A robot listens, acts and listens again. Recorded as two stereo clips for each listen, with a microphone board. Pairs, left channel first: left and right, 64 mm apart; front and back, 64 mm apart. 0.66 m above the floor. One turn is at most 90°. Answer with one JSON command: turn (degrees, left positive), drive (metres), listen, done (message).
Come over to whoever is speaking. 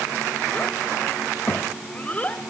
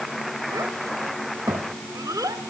{"turn": 90}
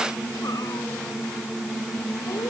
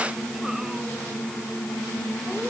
{"turn": 70}
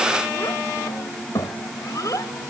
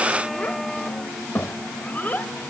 {"turn": 60}
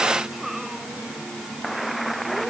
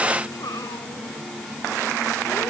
{"drive": 1.0}
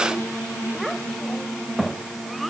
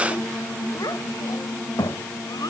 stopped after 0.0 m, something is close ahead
{"done": "Something is in my way. I am facing the child speaking but have not reached it."}